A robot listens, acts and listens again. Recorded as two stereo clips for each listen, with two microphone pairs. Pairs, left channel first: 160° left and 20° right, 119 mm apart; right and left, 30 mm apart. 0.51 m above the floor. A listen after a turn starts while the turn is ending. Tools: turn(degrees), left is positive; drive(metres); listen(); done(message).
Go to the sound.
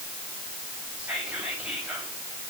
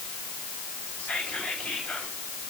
turn(degrees=-100)
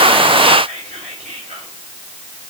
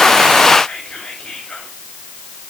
turn(degrees=-30)
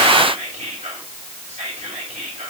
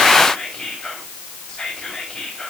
turn(degrees=-15)
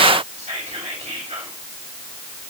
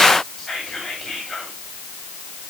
drive(metres=1.0)
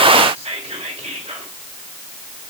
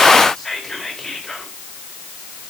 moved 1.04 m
drive(metres=1.0)
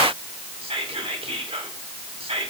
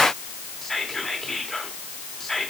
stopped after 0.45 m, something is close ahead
turn(degrees=-10)
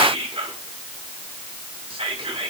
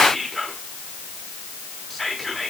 done("I am next to the whispering.")